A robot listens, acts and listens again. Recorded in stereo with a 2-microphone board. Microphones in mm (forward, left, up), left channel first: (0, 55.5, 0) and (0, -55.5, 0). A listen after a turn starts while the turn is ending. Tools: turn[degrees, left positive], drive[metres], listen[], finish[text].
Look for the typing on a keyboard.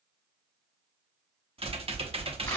Thought: The typing on a keyboard: about 60° right or 120° right.
Action: turn[-60]
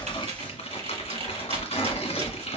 Thought: So it is at 60° right.
Action: turn[-60]
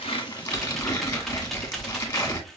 Action: finish[Found it: typing on a keyboard, straight ahead, under 1 m away.]